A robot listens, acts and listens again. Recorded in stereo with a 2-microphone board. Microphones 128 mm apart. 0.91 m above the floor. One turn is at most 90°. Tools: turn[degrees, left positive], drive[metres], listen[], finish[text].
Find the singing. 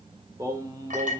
Thought: The singing: about 25° right or 155° right.
Action: turn[-25]
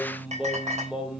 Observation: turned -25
Action: finish[Facing the singing, 2 to 4 m away.]